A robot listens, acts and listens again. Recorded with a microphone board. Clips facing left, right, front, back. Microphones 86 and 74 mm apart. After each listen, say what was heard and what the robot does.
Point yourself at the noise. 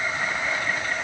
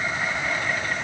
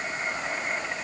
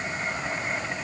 Keep listening.
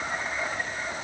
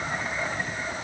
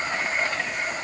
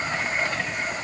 Keep listening.
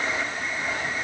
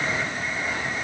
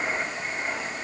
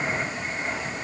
I can't make out anything.